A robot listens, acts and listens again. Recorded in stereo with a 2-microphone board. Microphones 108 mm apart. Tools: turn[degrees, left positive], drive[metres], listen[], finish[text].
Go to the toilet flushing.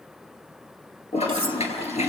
Action: turn[90]
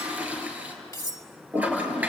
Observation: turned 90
Thought: So it is at 15° right.
Action: turn[-15]
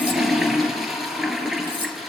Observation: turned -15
Action: drive[1.0]
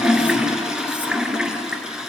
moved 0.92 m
Action: drive[1.0]
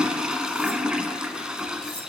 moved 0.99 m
Thought: The toilet flushing is now 10° right.
Action: turn[-10]
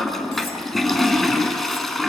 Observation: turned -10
Action: drive[1.0]
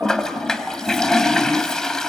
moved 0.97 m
Action: drive[1.0]
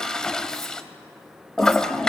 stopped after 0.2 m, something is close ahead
Action: finish[Arrived at the toilet flushing, straight ahead.]